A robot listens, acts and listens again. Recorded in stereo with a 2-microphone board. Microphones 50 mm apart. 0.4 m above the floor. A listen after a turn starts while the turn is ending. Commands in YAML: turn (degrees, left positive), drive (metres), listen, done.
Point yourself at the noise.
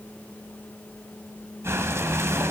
turn: -65
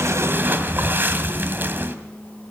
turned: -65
turn: -45
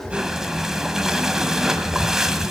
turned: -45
turn: -10
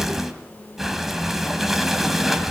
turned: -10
done: "Found it: breathing, straight ahead."